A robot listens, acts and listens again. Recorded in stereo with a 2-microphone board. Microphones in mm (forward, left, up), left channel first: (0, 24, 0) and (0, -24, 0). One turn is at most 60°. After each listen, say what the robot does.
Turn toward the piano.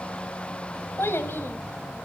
Keep listening.
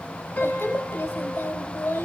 Turn 45° left.
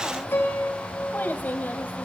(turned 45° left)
Turn 60° left.
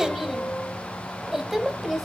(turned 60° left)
Turn 30° left.
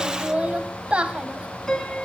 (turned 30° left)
Facing the piano, 2 to 4 m away.